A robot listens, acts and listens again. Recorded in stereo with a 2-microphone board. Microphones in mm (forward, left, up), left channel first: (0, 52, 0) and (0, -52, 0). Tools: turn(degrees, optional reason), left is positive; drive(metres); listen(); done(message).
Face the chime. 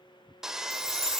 turn(degrees=-65, reason="The chime: about 65° right or 115° right.")
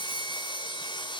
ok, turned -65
listen()
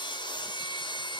listen()
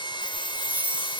turn(degrees=-15, reason="So it is at 15° right.")
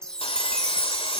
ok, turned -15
done("Found it: a chime, straight ahead.")